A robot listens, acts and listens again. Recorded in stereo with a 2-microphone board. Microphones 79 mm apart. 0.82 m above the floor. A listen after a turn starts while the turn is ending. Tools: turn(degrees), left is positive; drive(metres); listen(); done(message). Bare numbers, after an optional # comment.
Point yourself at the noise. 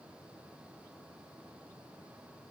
listen()
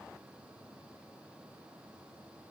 listen()
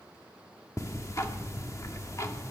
# The ticking: about 40° left or 140° left.
turn(40)
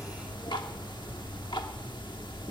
# So it is at 100° left.
turn(100)
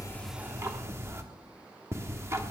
# The ticking is now 40° right.
turn(-40)
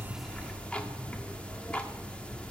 # The ticking is now 15° left.
turn(15)
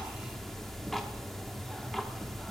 done("Found it: ticking, straight ahead, 1 to 2 m away.")